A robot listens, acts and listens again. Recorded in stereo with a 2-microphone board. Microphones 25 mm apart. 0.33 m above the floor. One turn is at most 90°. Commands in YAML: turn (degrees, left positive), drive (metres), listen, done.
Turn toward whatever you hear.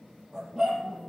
turn: -30
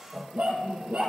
turn: -90
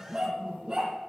turn: -25
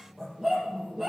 done: "Facing the dog barking, over 4 m away."